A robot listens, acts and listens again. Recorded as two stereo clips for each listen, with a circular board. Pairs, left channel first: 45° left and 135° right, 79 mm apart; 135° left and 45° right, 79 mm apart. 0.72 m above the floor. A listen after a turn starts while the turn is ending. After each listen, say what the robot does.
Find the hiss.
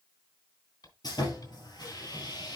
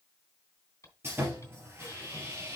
Turn 85° left.
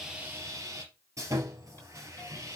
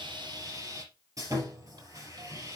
Keep listening.
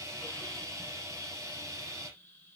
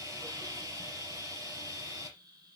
Turn 20° right.
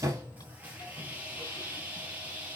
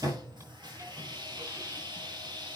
Keep listening.
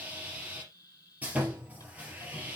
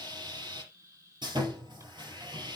Found it: a hiss, straight ahead.